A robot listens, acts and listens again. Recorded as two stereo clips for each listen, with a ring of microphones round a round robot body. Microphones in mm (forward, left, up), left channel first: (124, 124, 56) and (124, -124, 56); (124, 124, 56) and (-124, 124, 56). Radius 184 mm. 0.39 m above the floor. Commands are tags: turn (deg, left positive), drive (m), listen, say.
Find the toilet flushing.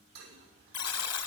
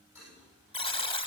<turn deg="-95"/>
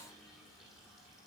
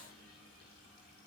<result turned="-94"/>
<listen/>
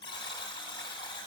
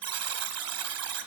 <listen/>
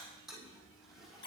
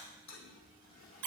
<say>Facing the toilet flushing, over 4 m away.</say>